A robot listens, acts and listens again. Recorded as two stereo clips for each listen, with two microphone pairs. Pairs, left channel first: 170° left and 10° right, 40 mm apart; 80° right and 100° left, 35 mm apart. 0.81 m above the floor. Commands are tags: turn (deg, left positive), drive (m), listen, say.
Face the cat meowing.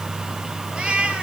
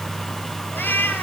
<turn deg="-75"/>
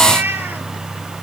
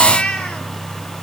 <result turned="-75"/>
<turn deg="-25"/>
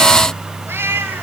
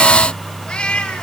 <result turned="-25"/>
<turn deg="-20"/>
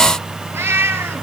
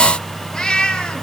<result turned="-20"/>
<turn deg="-10"/>
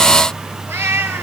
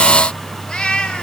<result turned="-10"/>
<turn deg="-10"/>
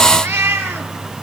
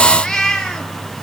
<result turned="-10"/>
<say>Found it: a cat meowing, straight ahead, 2 to 4 m away.</say>